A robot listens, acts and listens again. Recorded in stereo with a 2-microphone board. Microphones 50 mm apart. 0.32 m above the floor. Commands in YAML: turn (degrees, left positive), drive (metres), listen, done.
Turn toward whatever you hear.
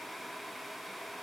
listen: true
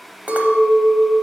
turn: -35
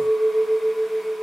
turn: -105
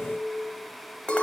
turn: 35
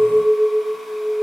turn: -15
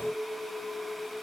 done: "Facing the clink, under 1 m away."